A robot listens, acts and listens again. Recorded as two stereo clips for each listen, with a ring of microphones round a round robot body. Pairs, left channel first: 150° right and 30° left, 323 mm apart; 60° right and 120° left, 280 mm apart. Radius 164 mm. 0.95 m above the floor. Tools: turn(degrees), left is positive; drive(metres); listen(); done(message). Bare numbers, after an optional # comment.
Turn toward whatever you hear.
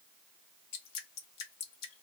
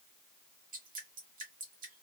# The dripping: straight behind.
turn(180)
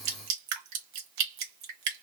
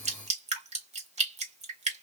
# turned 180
# The dripping is now 55° left.
turn(55)
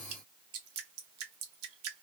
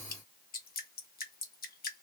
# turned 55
done("Facing the dripping.")